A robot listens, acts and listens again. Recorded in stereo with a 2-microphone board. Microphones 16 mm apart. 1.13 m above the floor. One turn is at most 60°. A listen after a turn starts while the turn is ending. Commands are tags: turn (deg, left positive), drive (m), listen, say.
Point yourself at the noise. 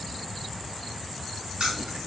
<turn deg="-60"/>
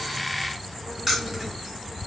<turn deg="-15"/>
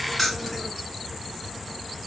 <say>Facing the keys jangling, 1 to 2 m away.</say>